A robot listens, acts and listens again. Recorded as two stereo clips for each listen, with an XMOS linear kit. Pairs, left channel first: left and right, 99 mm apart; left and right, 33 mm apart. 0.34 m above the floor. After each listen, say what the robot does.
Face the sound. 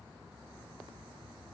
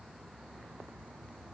Keep listening.
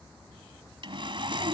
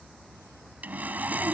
Turn 55° right.
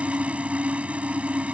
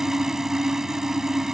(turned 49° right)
Turn 15° right.
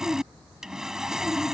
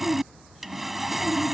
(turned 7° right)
Found it: sawing, straight ahead.